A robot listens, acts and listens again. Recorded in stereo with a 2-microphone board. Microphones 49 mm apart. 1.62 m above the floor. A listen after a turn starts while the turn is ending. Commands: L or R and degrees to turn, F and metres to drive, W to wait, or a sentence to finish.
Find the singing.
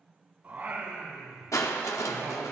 R55
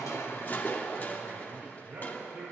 R50
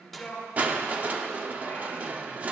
W
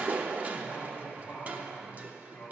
L20
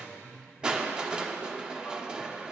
Found it: singing, straight ahead, over 4 m away.